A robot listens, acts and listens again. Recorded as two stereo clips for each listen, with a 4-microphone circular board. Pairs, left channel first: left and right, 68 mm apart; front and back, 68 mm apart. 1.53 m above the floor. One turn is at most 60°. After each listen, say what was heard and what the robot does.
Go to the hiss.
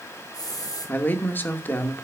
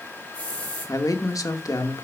The hiss: 70° left. Turn 60° left.
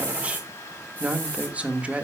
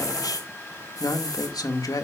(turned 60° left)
The hiss is now 20° left. Turn 20° left.
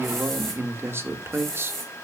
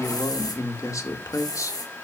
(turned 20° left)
Drive 1.0 m forward.
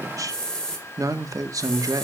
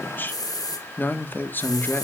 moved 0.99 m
The hiss is now 10° left. Turn 10° left.
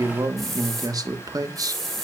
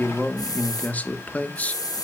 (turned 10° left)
Drive 1.0 m forward.
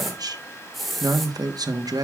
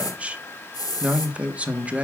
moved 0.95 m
Drive 1.0 m forward.
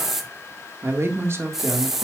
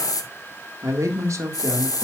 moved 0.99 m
Drive 1.0 m forward.
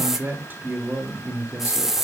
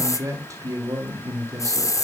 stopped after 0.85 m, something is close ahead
The hiss is now 10° right. Turn 10° right.
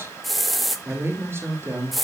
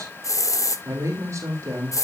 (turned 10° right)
Arrived at the hiss, straight ahead.